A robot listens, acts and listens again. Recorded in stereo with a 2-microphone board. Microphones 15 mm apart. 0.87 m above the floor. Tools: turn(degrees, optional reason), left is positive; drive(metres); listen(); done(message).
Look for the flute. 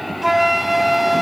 turn(degrees=-30)
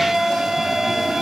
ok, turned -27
turn(degrees=-135, reason="So it is at 135° right.")
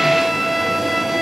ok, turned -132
done("Found it: a flute, straight ahead.")